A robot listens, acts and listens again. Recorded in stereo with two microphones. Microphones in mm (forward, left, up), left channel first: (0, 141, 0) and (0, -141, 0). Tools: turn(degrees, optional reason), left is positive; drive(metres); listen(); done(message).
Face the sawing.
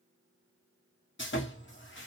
turn(degrees=40, reason="The sawing: about 40° left or 140° left.")
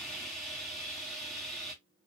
done("Found it: sawing, straight ahead.")